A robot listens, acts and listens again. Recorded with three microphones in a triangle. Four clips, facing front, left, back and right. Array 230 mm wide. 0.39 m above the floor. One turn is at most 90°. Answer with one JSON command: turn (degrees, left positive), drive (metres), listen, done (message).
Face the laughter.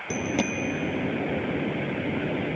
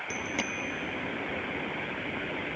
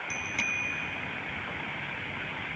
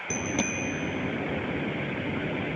{"listen": true}
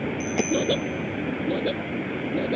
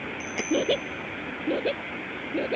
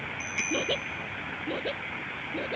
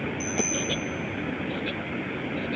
{"turn": 50}
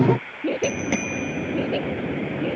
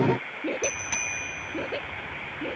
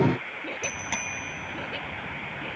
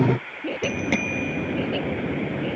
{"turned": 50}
{"turn": 10}
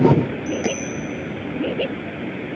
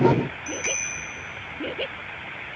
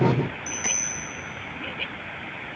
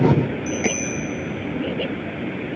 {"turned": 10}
{"done": "Facing the laughter."}